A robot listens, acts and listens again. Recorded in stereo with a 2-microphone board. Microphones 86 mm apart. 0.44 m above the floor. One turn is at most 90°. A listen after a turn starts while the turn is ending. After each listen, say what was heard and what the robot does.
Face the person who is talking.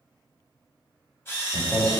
Turn 30° left.
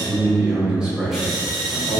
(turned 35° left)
Turn 30° left.
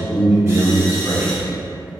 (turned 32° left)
So it is at 15° right. Turn 15° right.
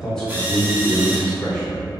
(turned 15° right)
The man speaking is now 15° left. Turn 15° left.
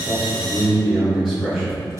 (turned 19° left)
Found it: a man speaking, straight ahead, 2 to 4 m away.